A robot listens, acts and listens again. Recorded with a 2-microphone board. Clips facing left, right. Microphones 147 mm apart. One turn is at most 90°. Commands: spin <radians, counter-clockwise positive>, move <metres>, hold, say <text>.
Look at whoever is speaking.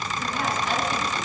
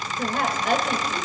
spin -1.13
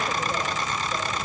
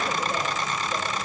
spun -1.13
hold
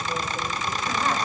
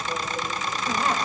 hold
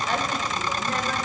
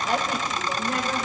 spin -0.17
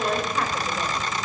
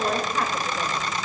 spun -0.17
say Found it: a woman speaking, straight ahead, 2 to 4 m away.